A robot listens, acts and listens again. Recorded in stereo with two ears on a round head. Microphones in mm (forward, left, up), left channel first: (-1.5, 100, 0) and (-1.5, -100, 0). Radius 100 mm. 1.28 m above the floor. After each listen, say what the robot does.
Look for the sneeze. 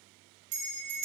Keep listening.
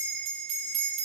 Keep listening.
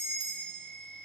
I can't make out a sneeze to turn to.